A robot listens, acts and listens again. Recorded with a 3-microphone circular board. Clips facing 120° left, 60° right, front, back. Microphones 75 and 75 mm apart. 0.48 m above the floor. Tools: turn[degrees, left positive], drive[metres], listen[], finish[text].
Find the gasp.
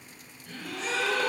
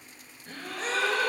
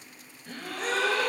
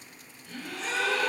Thought: The gasp: 25° right.
Action: turn[-25]
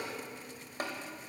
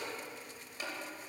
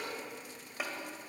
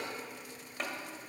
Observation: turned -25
Action: finish[Facing where the gasp came from. I can't hear it now.]